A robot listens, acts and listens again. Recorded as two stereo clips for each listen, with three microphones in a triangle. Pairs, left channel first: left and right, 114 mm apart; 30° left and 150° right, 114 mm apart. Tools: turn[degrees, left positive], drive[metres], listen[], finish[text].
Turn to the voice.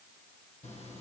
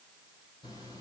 Action: listen[]
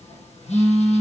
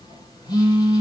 Action: listen[]
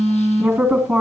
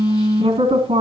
Thought: The woman speaking: straight behind.
Action: turn[180]
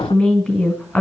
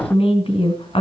Action: finish[Facing the woman speaking.]